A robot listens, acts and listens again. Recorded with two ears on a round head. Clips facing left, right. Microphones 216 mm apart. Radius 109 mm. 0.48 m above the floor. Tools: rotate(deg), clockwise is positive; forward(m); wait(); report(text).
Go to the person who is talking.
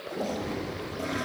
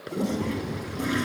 rotate(70)
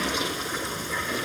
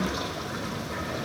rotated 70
wait()
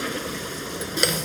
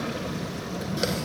rotate(35)
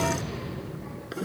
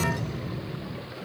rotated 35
forward(1.0)
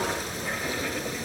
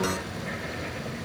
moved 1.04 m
wait()
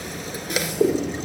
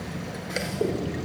rotate(10)
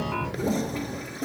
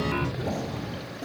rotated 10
forward(1.0)
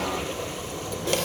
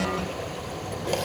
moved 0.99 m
forward(1.0)
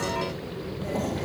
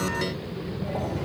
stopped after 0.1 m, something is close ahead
report("I am next to the child speaking.")